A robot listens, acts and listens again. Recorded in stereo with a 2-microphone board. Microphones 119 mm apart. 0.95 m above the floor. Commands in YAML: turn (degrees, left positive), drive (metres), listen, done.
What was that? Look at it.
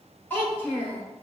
turn: 30
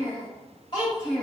turn: 140
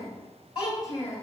turn: 30
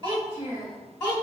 turn: 15
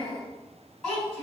done: "Found it: a child speaking, straight ahead, over 4 m away."